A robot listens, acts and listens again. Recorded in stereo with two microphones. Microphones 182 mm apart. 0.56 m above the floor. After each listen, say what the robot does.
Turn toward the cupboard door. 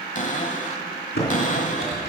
Turn 45° left.
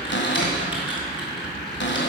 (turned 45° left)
Turn 90° left.
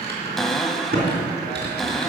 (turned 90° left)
Found it: a cupboard door, straight ahead, 1 to 2 m away.